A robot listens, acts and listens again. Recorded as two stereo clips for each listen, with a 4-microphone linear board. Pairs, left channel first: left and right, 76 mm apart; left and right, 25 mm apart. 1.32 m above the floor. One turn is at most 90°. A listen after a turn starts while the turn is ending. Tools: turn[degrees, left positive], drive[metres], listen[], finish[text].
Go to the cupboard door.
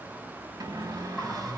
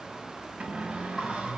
Thought: The cupboard door: about 50° right or 130° right.
Action: turn[-50]
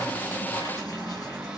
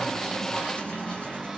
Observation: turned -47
Action: drive[1.0]
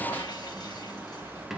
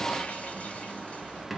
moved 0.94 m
Action: drive[1.0]
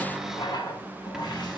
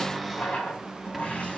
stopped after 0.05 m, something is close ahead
Action: finish[Arrived at the cupboard door, straight ahead.]